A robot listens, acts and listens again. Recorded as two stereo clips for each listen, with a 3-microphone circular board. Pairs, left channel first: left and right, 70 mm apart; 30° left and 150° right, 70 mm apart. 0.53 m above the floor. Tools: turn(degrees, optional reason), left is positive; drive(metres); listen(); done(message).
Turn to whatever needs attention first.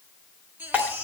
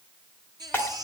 turn(degrees=-155, reason="The baby crying: 155° right.")
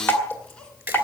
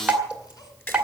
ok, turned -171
turn(degrees=15, reason="Nothing new. It was at 15° left.")
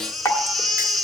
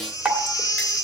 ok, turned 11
done("Facing the baby crying.")